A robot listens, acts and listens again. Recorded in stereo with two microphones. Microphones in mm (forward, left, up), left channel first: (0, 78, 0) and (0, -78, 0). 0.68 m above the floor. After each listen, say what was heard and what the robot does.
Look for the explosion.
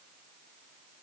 Keep listening.
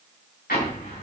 Turn 90° left.
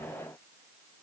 Facing where the explosion came from. I can't hear it now.